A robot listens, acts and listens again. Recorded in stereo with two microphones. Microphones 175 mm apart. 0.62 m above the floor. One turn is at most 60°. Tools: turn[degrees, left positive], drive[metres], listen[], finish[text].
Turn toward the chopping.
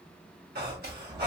Thought: The chopping: about 55° right or 125° right.
Action: turn[-55]
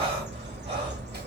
Action: listen[]
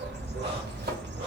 Action: listen[]
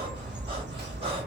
Action: finish[I heard chopping, but can't make it out now. It was about straight ahead or 70° right.]